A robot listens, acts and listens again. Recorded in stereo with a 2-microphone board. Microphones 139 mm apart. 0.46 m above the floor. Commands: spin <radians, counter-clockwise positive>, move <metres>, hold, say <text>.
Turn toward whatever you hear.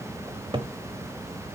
spin -0.61
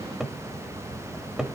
say Found it: a cupboard door, straight ahead, 1 to 2 m away.